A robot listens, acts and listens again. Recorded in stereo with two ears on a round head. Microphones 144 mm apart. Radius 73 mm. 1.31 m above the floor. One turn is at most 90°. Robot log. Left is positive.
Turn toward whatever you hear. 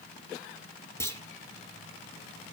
note: The clunk: about 15° left or 165° left.
cmd yaw +15
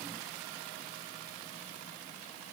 cmd idle
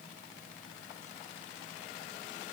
end: I heard a clunk, but can't make it out now. It was about straight ahead or 150° left.